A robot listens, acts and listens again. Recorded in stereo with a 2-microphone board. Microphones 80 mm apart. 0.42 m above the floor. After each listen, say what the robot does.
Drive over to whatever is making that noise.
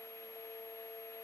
Keep listening.
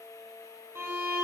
Turn 30° right.
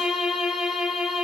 Turn 10° right.
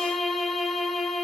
Drive 1.0 m forward.
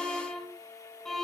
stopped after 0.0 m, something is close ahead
Something is in my way. I am facing the violin but have not reached it.